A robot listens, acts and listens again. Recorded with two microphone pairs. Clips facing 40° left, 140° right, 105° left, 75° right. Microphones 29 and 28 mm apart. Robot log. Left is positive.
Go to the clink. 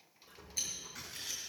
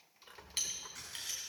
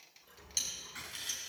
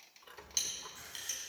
note: The clink: 160° right.
cmd yaw -160
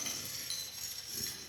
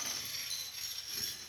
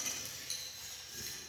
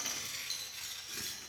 cmd fwd 1.0
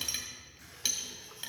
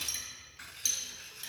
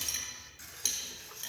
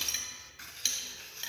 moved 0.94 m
note: The clink is now 10° right.
cmd yaw -10
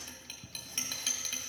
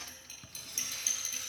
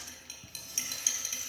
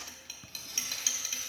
cmd fwd 1.0
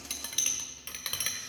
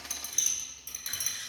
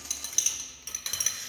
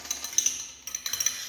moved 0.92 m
cmd fwd 1.0
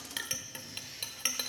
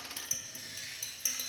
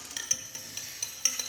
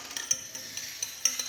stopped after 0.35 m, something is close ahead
note: The clink is now 15° left.
cmd yaw +15
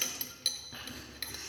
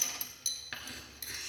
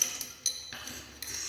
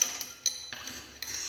end: I am next to the clink.